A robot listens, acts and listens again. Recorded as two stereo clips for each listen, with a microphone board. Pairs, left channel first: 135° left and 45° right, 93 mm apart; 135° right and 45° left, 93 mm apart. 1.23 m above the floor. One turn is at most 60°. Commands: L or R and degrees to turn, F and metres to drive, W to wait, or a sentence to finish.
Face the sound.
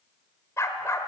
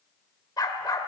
R60
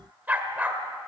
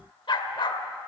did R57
R60
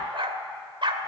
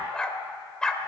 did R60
R55
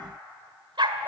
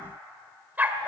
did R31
R25
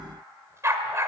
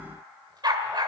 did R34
L10
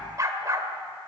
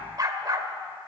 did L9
Facing the dog barking.